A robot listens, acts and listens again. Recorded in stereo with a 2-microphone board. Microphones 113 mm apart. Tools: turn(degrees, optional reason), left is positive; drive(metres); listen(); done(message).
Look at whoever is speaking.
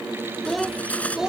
turn(degrees=-30)
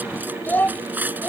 turn(degrees=15, reason="So it is at 15° left.")
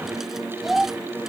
done("Facing the child speaking.")